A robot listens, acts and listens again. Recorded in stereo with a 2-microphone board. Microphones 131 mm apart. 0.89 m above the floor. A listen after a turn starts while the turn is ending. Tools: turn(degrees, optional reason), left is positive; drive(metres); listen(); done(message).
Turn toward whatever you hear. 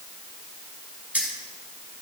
turn(degrees=-30)
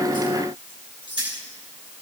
turn(degrees=-140, reason="So it is at 140° right.")
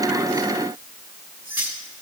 turn(degrees=-15, reason="The keys jangling is now 15° right.")
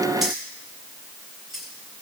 done("Facing the keys jangling.")